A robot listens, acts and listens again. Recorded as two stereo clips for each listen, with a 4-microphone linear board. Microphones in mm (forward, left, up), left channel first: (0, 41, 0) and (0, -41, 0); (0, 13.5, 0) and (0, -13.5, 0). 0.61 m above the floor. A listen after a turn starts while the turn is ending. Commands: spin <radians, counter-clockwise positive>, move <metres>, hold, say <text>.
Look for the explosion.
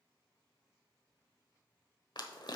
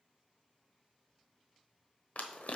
hold
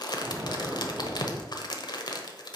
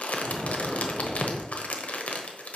spin -0.35
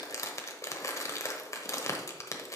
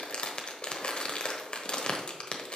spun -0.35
hold
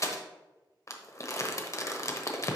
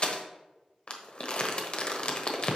say I heard an explosion, but can't make it out now. It was about straight ahead or 140° right.